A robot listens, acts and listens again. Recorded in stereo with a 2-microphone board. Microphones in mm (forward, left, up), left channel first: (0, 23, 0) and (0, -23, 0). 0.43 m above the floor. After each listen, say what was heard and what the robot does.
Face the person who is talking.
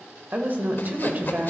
The woman speaking: about 40° right or 140° right. Turn 40° right.
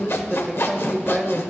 So it is at 10° right. Turn 10° right.
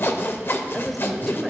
Keep listening.
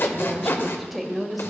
Found it: a woman speaking, straight ahead, 1 to 2 m away.